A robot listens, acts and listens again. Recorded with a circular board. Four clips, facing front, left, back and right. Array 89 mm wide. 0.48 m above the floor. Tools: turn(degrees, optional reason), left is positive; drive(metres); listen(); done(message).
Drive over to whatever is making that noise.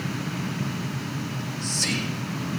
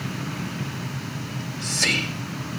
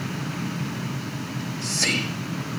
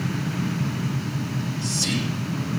turn(degrees=125, reason="The whispering: 125° left.")
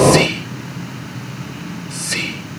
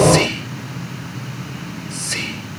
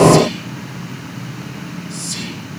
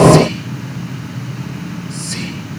turn(degrees=30, reason="The whispering is now 30° left.")
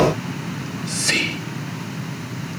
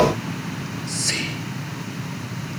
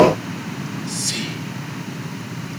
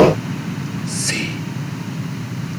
drive(metres=1.0)
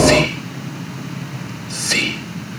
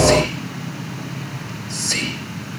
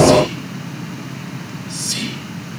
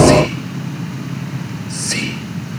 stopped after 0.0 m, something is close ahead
done("Something is in my way. I am facing the whispering but have not reached it.")